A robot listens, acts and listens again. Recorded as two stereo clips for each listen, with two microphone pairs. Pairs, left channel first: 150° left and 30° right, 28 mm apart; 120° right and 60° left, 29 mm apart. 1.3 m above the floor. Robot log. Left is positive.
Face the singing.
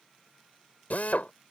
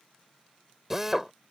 cmd idle
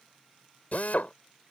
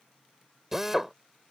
cmd idle
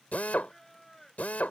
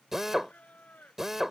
note: The singing: 130° right.
cmd yaw -130
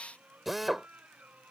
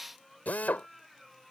note: The singing is now 25° right.
cmd yaw -25
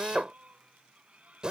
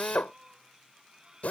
end: Facing the singing.